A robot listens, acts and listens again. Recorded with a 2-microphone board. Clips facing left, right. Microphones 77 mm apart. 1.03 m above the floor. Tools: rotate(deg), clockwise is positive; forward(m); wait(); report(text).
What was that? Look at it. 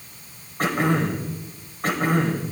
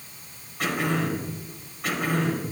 rotate(-40)
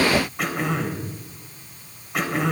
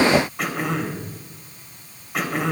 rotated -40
report("Found it: throat clearing, straight ahead, 2 to 4 m away.")